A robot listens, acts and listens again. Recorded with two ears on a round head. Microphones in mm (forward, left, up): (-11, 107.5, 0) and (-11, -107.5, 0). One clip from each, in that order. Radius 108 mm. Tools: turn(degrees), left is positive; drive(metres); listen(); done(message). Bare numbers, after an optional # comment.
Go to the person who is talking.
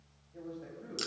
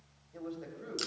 # The man speaking: about 75° right or 105° right.
turn(-75)
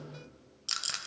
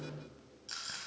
listen()
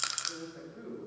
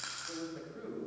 # So it is at 25° right.
turn(-25)
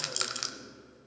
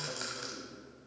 listen()
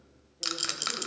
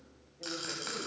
listen()
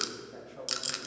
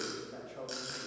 drive(1.0)
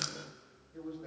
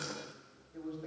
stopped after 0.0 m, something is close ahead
done("Blocked. The man speaking is further on, straight ahead.")